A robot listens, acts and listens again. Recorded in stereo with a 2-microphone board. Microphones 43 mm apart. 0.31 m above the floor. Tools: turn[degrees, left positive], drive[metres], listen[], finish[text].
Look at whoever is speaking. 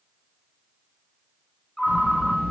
Thought: The child speaking: about 55° left or 125° left.
Action: turn[55]
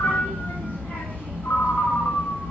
Thought: So it is at 60° left.
Action: turn[60]
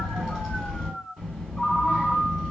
Thought: The child speaking is now 15° right.
Action: turn[-15]
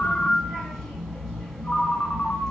Thought: The child speaking is now 10° right.
Action: turn[-10]
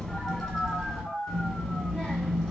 Action: finish[Found it: a child speaking, straight ahead, 1 to 2 m away.]